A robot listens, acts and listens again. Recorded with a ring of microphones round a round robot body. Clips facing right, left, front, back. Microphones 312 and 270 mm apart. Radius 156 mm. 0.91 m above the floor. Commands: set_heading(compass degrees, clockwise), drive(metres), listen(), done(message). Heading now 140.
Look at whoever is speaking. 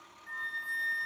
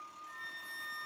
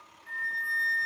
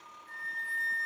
listen()
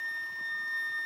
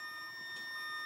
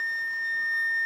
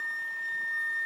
listen()
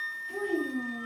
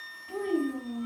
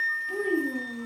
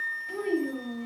set_heading(65)
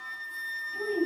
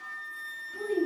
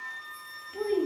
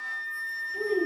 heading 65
done("Facing the child speaking, 1 to 2 m away.")